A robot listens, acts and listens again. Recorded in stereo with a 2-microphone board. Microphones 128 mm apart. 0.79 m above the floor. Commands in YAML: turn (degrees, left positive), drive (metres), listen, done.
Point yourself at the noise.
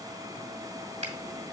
turn: -60
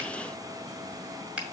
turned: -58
turn: -10
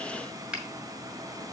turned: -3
done: "Facing the finger snap, 1 to 2 m away."